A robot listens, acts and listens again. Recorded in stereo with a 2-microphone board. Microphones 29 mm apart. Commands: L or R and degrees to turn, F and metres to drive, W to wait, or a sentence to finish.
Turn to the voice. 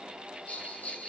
W
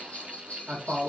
R50
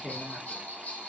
Facing the man speaking, 1 to 2 m away.